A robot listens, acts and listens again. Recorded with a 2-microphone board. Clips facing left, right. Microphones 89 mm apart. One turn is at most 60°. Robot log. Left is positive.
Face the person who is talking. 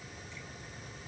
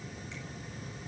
cmd idle
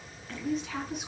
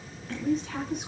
cmd yaw +30
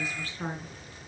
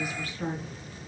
note: So it is at 150° left.
cmd yaw +60
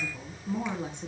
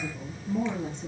note: The woman speaking is now 90° left.
cmd yaw +60
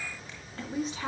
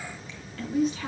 note: The woman speaking is now 35° left.
cmd yaw +35
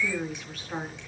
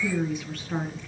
end: Facing the woman speaking.